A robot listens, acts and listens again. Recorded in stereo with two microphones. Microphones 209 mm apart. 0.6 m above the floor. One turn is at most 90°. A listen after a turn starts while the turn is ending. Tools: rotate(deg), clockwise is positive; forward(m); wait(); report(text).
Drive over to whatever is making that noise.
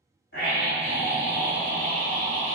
rotate(-75)
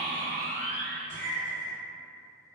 rotate(-20)
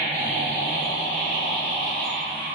forward(1.0)
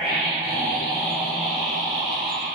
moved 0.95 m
forward(1.0)
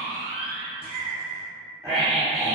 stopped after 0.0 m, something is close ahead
report("Arrived at the scream, straight ahead.")